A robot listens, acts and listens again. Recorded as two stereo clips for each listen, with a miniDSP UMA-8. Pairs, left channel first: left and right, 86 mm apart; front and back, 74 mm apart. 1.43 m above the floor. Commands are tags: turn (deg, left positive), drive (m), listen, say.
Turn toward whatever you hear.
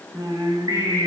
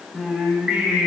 <turn deg="-105"/>
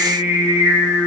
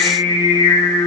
<turn deg="-20"/>
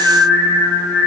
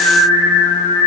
<say>Facing the singing.</say>